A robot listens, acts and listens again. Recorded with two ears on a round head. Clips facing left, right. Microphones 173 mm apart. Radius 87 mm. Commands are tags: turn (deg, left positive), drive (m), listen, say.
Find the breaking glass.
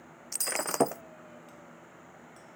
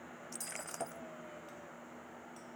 <turn deg="90"/>
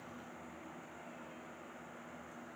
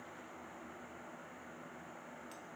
<say>Facing where the breaking glass came from. I can't hear it now.</say>